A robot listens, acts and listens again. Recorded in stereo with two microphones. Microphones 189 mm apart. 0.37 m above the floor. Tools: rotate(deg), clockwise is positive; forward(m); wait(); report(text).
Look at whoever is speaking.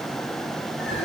wait()
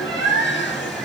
wait()
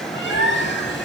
report("I can't make out anyone speaking to turn to.")